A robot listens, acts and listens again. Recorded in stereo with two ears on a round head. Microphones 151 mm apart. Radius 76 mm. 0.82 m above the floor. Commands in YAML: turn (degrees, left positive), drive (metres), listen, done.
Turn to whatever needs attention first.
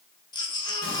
turn: 25
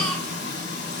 done: "Found it: a baby crying, straight ahead."